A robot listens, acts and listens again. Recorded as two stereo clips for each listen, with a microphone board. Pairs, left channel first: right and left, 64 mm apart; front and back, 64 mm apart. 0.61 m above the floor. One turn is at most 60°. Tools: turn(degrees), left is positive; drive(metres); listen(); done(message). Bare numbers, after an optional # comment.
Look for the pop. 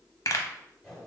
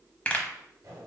# The pop: 65° right.
turn(-60)
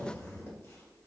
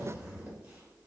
done("I heard a pop from this way, but can't make it out now.")